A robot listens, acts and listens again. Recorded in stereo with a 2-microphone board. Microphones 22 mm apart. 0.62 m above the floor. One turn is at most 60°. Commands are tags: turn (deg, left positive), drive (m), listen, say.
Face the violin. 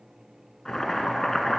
<listen/>
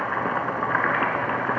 <listen/>
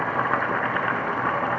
<say>I can't make out a violin, only boiling.</say>